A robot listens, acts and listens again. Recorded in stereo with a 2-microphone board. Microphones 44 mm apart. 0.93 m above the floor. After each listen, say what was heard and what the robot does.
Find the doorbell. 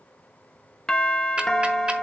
Turn 30° left.
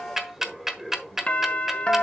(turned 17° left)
So it is at 150° left. Turn 150° left.
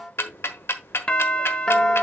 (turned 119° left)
The doorbell is now 30° left. Turn 30° left.
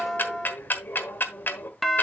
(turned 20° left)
The doorbell is now 10° left. Turn 10° left.
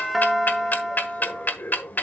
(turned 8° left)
Facing the doorbell, 1 to 2 m away.